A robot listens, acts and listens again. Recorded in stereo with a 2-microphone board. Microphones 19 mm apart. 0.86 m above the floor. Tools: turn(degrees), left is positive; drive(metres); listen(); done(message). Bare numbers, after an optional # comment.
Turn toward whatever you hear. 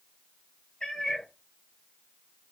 # The cat meowing: about 60° left or 120° left.
turn(60)
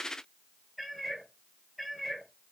done("Found it: a cat meowing, straight ahead, 2 to 4 m away.")